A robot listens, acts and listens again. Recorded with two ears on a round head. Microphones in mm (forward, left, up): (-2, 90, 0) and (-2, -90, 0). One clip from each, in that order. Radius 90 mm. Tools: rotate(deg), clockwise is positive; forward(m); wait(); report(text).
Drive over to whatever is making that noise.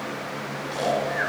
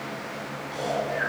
rotate(-35)
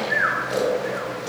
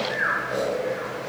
rotate(-105)
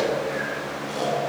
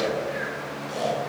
rotate(-10)
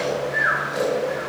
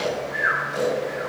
forward(1.0)
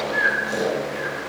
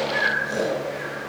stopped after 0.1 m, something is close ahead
report("Blocked. The snoring is further on, straight ahead.")